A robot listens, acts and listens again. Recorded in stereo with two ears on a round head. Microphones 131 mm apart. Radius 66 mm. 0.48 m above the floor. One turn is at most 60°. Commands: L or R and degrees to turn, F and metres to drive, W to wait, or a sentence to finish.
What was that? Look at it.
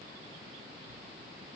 W
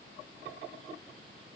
W
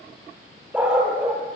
R30
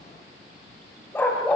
L10
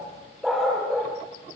Found it: a dog barking, straight ahead, over 4 m away.